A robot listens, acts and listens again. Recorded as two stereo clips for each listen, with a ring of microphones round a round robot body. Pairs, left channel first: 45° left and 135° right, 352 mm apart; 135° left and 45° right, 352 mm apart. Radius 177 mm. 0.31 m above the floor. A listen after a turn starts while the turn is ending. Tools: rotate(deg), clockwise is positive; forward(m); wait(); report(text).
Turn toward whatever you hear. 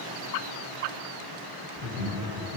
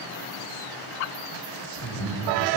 rotate(-165)
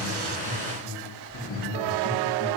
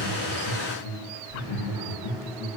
rotate(-80)
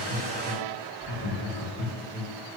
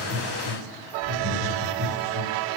rotate(10)
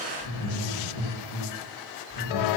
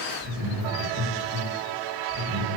report("Facing the laughter, over 4 m away.")